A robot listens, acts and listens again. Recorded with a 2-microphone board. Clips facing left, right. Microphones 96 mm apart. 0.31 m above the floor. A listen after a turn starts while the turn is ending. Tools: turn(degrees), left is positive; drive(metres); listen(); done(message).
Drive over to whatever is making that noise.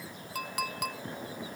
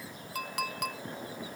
turn(degrees=30)
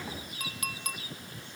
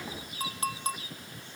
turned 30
turn(degrees=-30)
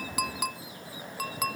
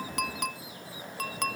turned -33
drive(metres=1.0)
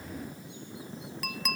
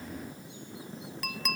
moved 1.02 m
drive(metres=1.0)
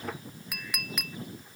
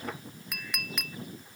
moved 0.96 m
drive(metres=1.0)
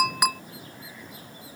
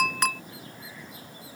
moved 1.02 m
turn(degrees=10)
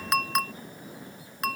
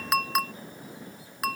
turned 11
drive(metres=1.0)
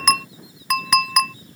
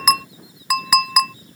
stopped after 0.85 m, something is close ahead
done("I am next to the clink.")